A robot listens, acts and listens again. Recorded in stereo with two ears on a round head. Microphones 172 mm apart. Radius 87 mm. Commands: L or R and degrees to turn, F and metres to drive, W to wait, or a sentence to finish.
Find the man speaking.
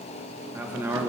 R30
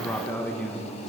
Found it: a man speaking, straight ahead, 1 to 2 m away.